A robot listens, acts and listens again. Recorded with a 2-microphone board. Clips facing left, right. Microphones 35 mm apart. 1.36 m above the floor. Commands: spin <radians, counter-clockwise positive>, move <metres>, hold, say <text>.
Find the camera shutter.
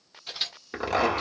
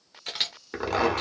spin -1.57
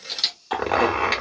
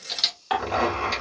say Found it: a camera shutter, straight ahead, 1 to 2 m away.